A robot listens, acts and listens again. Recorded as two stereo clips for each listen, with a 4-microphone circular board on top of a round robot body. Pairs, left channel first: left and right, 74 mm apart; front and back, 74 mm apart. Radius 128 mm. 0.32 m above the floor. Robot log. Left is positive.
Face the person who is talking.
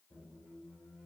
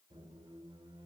cmd idle
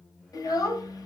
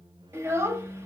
note: The child speaking: 125° left.
cmd yaw +125
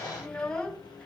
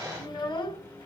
note: The child speaking is now 10° left.
cmd yaw +10
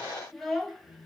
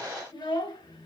end: Found it: a child speaking, straight ahead.